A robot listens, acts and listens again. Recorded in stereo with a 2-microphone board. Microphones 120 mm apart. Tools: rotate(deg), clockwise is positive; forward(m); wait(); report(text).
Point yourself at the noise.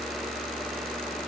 wait()
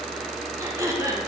rotate(25)
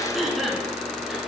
report("Found it: throat clearing, straight ahead.")